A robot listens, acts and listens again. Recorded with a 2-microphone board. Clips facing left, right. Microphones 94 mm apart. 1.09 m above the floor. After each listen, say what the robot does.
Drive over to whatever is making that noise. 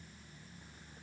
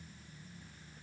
Keep listening.
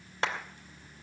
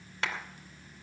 Turn 30° left.
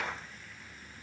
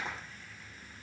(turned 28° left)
Turn 125° left.
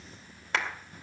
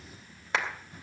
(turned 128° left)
Drive 1.0 m forward.
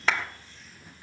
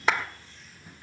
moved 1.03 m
Turn 10° right.
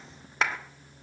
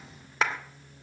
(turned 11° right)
Drive 1.0 m forward.
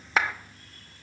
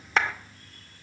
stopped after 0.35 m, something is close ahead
I am next to the clap.